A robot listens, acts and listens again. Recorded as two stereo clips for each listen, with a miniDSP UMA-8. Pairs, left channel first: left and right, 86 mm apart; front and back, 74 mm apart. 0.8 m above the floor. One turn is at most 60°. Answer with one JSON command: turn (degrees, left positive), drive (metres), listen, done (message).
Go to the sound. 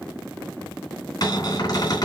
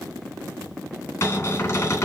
{"turn": 45}
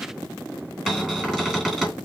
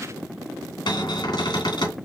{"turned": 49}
{"drive": 1.0}
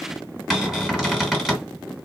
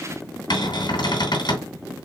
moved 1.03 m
{"drive": 1.0}
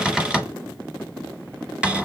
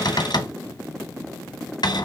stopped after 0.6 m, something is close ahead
{"turn": -10}
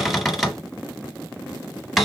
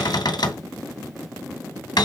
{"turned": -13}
{"done": "I am next to the cupboard door."}